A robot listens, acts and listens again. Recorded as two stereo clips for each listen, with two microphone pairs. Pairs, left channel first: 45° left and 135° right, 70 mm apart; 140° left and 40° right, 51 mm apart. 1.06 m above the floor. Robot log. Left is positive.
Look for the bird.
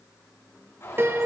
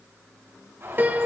note: The bird: 10° right.
cmd yaw -10
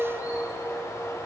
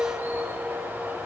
end: Found it: a bird, straight ahead.